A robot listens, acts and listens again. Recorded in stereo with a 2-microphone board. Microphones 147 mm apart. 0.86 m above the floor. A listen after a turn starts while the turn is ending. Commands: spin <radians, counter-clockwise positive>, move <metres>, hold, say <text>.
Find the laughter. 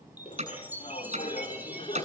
spin 0.79
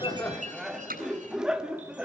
say Facing the laughter, 2 to 4 m away.